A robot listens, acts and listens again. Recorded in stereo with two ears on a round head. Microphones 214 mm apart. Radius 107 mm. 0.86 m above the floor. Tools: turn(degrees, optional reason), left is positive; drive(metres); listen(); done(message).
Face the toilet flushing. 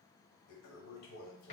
turn(degrees=65, reason="The toilet flushing: about 65° left or 115° left.")
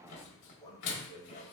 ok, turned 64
turn(degrees=35, reason="So it is at 35° left.")
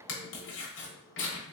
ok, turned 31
done("Found it: a toilet flushing, straight ahead.")